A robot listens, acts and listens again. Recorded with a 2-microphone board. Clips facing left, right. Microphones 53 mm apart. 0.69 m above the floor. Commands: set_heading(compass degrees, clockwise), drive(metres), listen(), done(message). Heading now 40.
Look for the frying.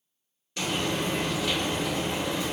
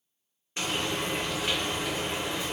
set_heading(70)
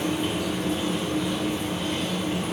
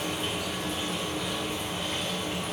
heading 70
done("Facing the frying, 1 to 2 m away.")